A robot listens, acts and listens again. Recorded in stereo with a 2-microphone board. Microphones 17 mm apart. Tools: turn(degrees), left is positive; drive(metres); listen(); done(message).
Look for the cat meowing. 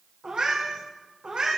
turn(degrees=-65)
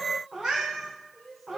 turn(degrees=-50)
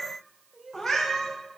done("Facing the cat meowing, 2 to 4 m away.")